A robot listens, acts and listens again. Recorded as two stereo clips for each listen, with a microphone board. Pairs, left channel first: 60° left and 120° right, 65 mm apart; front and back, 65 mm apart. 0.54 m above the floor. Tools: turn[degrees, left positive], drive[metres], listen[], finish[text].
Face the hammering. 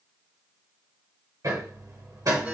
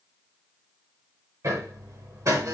Thought: The hammering: 145° right.
Action: turn[-145]
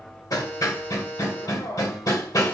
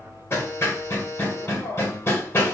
Thought: The hammering is now 45° left.
Action: turn[45]
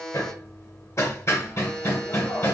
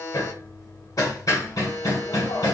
Thought: The hammering is now 20° left.
Action: turn[20]
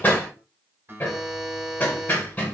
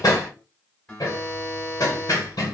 Action: finish[Found it: hammering, straight ahead.]